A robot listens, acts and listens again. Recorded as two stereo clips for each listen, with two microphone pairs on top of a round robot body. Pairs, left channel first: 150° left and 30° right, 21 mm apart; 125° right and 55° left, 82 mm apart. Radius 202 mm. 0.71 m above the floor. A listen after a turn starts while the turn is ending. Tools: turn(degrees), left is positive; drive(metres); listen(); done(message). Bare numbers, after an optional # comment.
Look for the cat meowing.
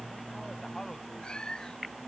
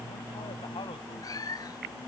# The cat meowing: 170° right.
turn(-170)
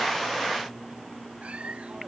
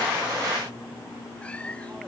listen()
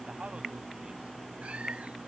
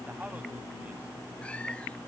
listen()
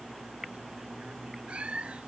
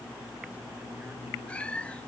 # The cat meowing is now 50° right.
turn(-50)
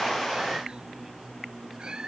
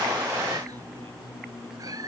# The cat meowing is now 10° left.
turn(10)
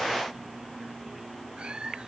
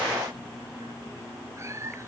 done("Found it: a cat meowing, straight ahead.")